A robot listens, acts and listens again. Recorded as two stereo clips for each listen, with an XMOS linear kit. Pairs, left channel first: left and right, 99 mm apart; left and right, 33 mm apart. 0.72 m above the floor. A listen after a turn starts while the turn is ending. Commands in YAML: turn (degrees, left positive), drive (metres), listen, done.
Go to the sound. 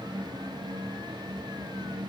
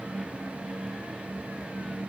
listen: true
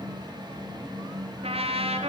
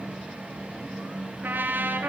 turn: -75
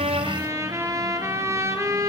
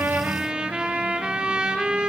turn: -30
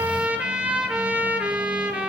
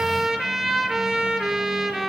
turn: -10
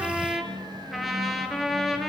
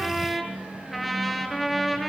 drive: 1.0
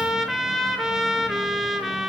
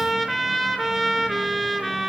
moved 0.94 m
drive: 1.0
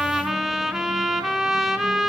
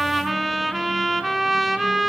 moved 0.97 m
drive: 1.0
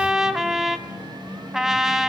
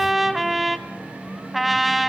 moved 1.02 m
drive: 1.0
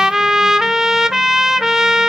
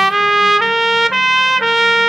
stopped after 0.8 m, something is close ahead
done: "Arrived at the trumpet, straight ahead."